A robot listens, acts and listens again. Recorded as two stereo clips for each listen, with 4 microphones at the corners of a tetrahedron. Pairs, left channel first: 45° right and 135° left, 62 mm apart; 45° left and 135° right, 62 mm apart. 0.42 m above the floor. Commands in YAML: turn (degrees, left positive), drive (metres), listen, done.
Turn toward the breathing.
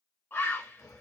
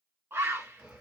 turn: -60
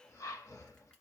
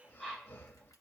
turn: -10
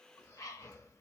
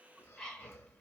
done: "Found it: breathing, straight ahead."